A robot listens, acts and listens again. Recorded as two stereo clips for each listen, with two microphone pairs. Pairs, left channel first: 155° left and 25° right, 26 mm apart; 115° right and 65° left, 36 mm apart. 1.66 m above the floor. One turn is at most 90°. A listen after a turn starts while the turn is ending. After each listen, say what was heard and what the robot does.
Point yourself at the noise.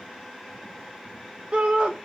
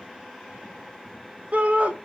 The shout: 15° left. Turn 15° left.
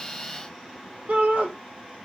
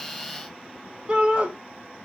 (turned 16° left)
Found it: a shout, straight ahead.